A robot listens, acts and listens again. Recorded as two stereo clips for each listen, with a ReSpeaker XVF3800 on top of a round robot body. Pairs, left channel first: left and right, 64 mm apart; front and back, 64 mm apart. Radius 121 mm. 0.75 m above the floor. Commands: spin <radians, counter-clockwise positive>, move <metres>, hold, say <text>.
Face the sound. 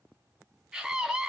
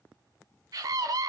spin -2.97
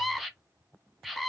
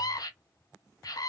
say Facing the scream.